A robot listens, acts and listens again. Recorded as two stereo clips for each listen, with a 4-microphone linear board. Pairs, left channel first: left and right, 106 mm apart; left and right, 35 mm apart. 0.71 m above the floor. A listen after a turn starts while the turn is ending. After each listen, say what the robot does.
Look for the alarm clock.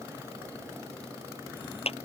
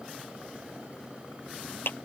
Keep listening.
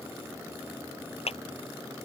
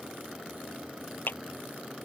Keep listening.
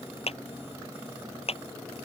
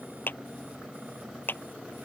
I can't make out an alarm clock to turn to.